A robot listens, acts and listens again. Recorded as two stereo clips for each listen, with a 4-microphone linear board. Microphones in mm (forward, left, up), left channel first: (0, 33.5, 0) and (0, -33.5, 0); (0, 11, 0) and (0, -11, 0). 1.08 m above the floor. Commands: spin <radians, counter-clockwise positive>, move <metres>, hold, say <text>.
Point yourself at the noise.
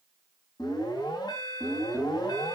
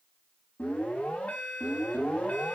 spin 1.57
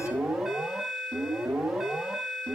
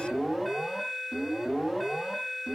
say Facing the alarm.